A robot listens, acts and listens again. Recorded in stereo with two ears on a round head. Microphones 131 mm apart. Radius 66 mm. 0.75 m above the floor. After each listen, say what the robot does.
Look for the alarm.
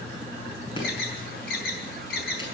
Turn 70° left.
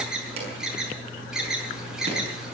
Found it: an alarm, straight ahead.